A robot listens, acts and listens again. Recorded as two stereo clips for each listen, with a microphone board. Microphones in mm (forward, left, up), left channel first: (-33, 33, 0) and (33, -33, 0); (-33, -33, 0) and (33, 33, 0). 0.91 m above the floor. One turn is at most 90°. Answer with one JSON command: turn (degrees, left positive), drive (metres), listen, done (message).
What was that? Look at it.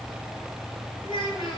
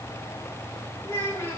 {"turn": 90}
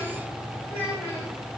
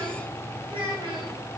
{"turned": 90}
{"turn": 75}
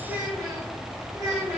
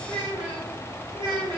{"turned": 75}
{"turn": 15}
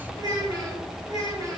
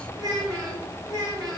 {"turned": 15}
{"done": "Found it: a child speaking, straight ahead."}